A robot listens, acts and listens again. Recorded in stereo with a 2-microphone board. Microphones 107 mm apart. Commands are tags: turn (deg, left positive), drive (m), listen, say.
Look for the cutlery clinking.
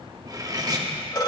<turn deg="-35"/>
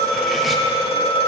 <listen/>
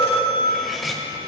<say>Facing the cutlery clinking, under 1 m away.</say>